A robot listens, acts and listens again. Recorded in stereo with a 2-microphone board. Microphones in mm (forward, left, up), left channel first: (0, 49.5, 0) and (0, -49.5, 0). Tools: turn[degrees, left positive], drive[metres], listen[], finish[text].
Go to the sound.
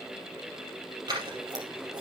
Thought: The scissors: about 45° right or 135° right.
Action: turn[-45]
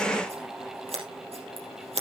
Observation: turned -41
Thought: So it is at 95° right.
Action: turn[-95]
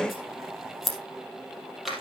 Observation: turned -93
Action: drive[1.0]
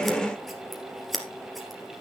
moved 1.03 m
Action: drive[1.0]
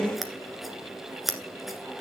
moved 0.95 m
Action: drive[1.0]
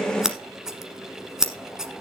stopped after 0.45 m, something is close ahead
Action: finish[Arrived at the scissors, straight ahead.]